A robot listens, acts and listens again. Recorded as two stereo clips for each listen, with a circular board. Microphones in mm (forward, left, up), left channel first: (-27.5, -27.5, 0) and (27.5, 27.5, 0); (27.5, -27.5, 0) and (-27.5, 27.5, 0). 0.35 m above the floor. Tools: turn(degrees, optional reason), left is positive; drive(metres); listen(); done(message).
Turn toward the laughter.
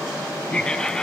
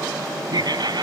turn(degrees=145, reason="The laughter: 145° left.")
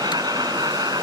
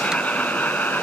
turn(degrees=20, reason="The laughter is now 20° left.")
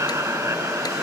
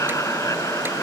done("Facing the laughter.")